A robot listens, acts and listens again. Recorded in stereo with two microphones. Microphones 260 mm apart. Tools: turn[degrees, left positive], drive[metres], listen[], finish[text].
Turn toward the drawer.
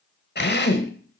Thought: The drawer: about 60° left or 120° left.
Action: turn[60]
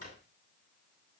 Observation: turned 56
Thought: So it is at 60° left.
Action: turn[60]
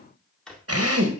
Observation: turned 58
Action: finish[Found it: a drawer, straight ahead, 1 to 2 m away.]